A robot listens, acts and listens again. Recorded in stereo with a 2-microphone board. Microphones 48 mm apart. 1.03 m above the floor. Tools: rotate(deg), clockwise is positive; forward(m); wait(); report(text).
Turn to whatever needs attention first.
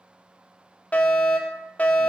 rotate(-30)
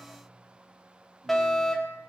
report("Found it: a fire alarm, straight ahead, 2 to 4 m away.")